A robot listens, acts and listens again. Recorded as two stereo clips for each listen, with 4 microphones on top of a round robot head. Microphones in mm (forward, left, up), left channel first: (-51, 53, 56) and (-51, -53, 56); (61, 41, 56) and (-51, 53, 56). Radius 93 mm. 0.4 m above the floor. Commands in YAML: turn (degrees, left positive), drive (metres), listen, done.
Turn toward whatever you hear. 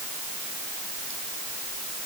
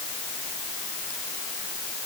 listen: true
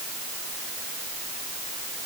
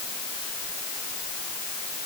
listen: true
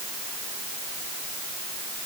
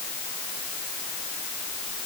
done: "I can't make out anything to turn to."